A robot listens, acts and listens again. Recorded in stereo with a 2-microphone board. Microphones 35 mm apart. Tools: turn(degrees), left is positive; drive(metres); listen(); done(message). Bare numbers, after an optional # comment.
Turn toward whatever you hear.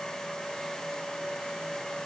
listen()
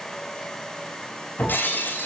turn(90)
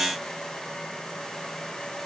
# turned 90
done("Facing where the breaking glass came from. I can't hear it now.")